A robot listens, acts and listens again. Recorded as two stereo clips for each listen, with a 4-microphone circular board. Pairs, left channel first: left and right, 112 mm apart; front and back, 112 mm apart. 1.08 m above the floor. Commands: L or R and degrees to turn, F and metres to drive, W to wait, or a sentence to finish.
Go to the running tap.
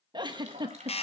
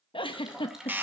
R95
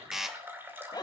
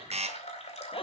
R20
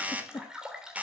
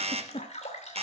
F1.0
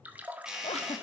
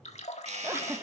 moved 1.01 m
R15
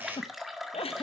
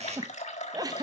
F1.0
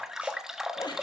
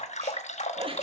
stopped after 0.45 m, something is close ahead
I am next to the running tap.